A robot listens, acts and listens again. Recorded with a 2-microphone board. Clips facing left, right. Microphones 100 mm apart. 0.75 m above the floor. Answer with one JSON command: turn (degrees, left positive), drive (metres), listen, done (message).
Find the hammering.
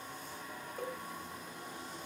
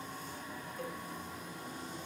{"listen": true}
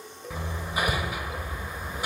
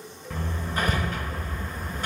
{"turn": 30}
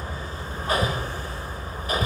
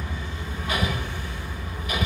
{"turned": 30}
{"turn": 140}
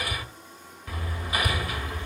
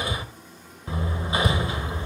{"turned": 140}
{"turn": -25}
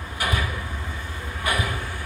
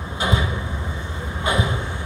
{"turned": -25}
{"turn": -25}
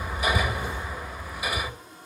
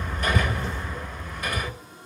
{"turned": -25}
{"turn": 10}
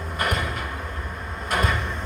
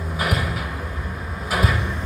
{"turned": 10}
{"done": "Found it: hammering, straight ahead."}